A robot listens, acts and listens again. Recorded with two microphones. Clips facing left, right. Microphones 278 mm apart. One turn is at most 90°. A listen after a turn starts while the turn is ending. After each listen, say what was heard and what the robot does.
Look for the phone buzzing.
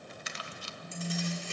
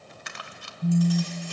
The phone buzzing: about 60° right or 120° right. Turn 60° right.
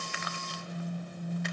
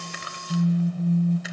So it is at 55° right. Turn 55° right.
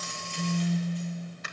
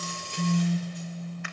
The phone buzzing is now 10° right. Turn 10° right.
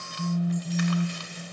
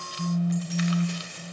Found it: a phone buzzing, straight ahead.